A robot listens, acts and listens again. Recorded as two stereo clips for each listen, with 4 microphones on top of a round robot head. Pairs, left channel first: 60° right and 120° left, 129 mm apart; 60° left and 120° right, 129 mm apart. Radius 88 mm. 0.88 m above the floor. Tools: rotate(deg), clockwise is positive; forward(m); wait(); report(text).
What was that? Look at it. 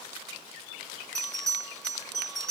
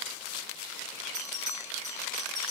rotate(145)
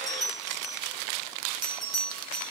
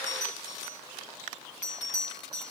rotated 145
rotate(-30)
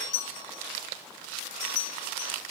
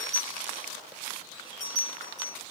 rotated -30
report("Found it: a bell, straight ahead, over 4 m away.")